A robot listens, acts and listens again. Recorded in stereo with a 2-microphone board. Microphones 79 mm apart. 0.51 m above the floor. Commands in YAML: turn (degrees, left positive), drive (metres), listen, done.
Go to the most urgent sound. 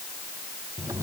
listen: true
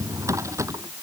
listen: true
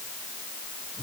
done: "I can't make out anything urgent, only a drawer."